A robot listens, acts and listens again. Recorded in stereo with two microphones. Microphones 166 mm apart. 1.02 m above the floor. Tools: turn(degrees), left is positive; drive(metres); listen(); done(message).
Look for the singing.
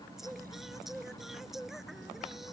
turn(degrees=30)
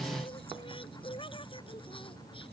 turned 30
turn(degrees=150)
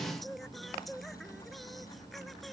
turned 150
done("Found it: singing, straight ahead.")